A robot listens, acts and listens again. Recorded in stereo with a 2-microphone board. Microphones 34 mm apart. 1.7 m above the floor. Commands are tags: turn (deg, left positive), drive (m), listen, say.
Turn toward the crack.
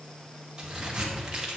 <turn deg="-25"/>
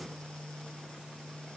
<listen/>
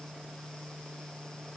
<say>I heard a crack, but can't make it out now. It was about straight ahead or 130° right.</say>